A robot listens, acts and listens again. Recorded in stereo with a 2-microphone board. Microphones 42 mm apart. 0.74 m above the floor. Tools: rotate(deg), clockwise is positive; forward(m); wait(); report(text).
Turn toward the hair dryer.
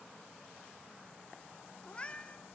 wait()
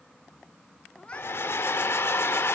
rotate(-75)
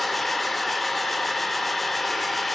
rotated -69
report("Found it: a hair dryer, straight ahead, under 1 m away.")